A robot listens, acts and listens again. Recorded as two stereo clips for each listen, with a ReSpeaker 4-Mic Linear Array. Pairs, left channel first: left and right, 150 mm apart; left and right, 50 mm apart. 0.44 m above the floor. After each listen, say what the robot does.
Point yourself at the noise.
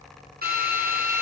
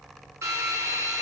Turn 90° right.
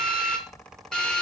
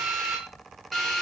Found it: a drill, straight ahead, over 4 m away.